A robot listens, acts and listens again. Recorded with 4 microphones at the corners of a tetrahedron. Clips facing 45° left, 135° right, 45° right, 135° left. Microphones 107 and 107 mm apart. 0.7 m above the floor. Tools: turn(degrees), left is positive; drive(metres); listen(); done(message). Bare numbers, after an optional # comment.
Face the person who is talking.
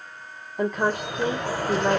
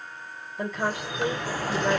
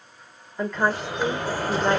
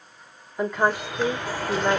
# The woman speaking: 60° left.
turn(60)
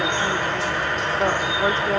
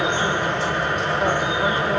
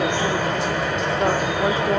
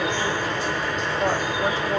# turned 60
# The woman speaking is now 10° right.
turn(-10)
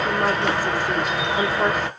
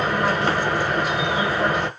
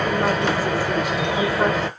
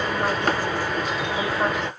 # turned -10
done("Found it: a woman speaking, straight ahead.")